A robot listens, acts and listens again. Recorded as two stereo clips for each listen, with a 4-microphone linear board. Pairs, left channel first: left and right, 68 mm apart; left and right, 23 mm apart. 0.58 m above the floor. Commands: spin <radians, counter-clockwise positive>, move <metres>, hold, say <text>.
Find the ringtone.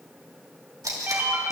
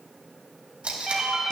spin -0.52
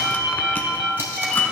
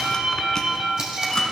say Facing the ringtone.